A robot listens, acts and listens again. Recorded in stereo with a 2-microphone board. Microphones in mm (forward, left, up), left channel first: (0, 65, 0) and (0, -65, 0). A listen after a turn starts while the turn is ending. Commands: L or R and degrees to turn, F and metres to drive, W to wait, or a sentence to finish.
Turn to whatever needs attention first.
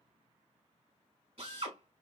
W
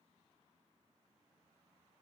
W
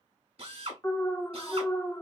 L20
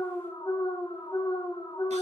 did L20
L135
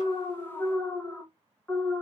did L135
L15
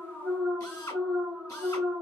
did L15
Found it: an alarm, straight ahead, under 1 m away.